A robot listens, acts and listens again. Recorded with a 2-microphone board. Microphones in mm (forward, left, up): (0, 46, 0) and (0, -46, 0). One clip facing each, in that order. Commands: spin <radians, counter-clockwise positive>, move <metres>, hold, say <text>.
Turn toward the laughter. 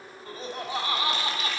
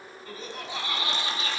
spin 0.79
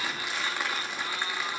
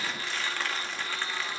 hold
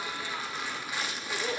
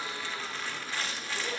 spin 1.13
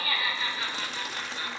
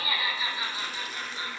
spin -0.35
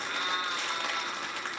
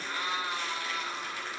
say Facing the laughter, over 4 m away.